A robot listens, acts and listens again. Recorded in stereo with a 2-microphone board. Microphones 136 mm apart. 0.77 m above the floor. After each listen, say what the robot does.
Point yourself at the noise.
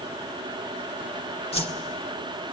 Turn 50° left.
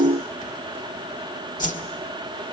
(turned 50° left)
Turn 80° left.
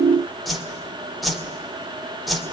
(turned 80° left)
Found it: a whoosh, straight ahead, 2 to 4 m away.